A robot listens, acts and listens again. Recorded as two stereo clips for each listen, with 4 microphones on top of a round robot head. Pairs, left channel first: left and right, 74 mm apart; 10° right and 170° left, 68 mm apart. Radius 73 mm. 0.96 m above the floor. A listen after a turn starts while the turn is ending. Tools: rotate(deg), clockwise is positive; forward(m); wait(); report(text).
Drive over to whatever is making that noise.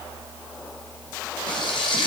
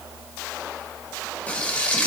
rotate(-60)
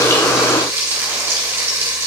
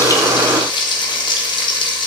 rotate(25)
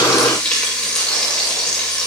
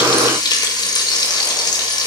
rotate(-10)
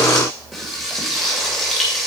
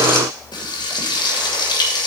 forward(1.0)
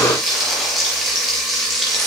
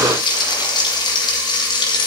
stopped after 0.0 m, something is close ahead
report("Blocked. The frying is further on, straight ahead.")